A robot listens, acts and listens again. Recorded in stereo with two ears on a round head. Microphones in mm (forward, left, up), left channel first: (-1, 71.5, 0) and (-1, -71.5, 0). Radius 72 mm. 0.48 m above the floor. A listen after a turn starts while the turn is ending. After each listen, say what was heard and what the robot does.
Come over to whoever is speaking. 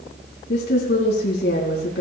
The woman speaking: about 75° left or 105° left. Turn 75° left.
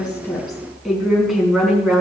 Drive 1.0 m forward.
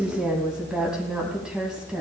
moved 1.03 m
Drive 1.0 m forward.
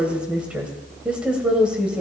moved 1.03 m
Drive 1.0 m forward.
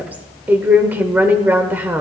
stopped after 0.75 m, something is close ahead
The woman speaking is now 15° right. Turn 15° right.
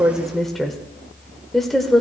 I am next to the woman speaking.